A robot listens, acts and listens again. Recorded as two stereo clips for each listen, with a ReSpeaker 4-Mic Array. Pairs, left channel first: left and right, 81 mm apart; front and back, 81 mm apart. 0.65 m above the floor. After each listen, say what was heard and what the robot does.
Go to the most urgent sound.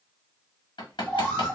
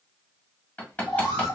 The alarm: 10° left. Turn 10° left.
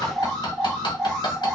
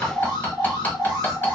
Drive 1.0 m forward.
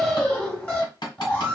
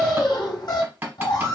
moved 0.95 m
The alarm is now 10° left. Turn 10° left.
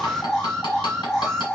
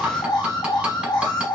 Drive 1.0 m forward.
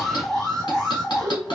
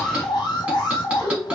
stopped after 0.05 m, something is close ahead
Arrived at the alarm, straight ahead.